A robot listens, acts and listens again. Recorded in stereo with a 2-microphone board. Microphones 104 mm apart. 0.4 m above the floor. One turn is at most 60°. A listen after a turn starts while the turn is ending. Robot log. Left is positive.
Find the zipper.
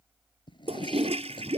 note: The zipper: about 50° left or 130° left.
cmd yaw +50
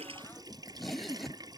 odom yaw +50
end: Facing the zipper.